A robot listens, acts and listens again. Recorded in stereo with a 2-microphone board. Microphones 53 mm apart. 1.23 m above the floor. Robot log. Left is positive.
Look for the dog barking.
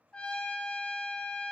cmd idle
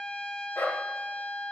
note: The dog barking: about 70° left or 110° left.
cmd yaw +70
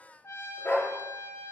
note: So it is at 35° left.
cmd yaw +35
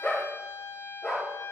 note: The dog barking is now 15° left.
cmd yaw +15
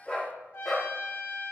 end: Found it: a dog barking, straight ahead, 2 to 4 m away.